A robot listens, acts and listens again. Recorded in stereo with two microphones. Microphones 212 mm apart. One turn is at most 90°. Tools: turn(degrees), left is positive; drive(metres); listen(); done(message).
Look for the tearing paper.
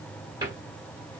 listen()
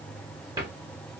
listen()
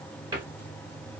done("I can't make out tearing paper, only a cupboard door.")